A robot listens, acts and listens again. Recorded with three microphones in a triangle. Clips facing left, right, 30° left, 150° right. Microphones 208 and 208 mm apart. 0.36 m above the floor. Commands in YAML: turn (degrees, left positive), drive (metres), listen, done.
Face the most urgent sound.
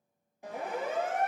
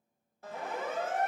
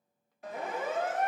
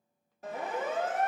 turn: 165
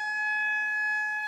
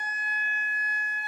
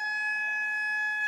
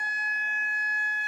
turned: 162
done: "Found it: a siren, straight ahead."